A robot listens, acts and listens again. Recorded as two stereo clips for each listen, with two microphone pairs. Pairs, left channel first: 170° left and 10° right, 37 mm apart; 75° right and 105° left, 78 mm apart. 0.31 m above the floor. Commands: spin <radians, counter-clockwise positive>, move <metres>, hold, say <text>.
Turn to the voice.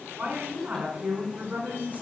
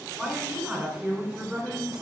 spin 0.44
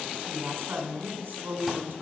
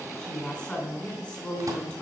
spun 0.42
say Facing the woman speaking, 2 to 4 m away.